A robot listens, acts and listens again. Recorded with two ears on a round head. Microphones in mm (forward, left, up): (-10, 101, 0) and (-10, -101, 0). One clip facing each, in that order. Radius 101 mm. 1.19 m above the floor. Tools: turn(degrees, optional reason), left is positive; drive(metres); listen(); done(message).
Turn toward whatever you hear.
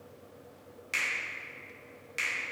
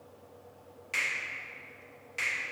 turn(degrees=20, reason="The finger snap: about 20° left or 160° left.")
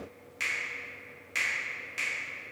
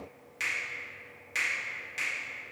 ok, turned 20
done("Facing the finger snap.")